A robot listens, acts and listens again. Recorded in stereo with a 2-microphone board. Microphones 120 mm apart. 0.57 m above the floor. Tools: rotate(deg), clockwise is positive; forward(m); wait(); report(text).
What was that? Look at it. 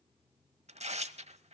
rotate(70)
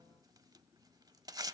rotate(35)
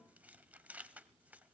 rotate(15)
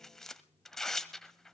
report("Found it: tearing paper, straight ahead.")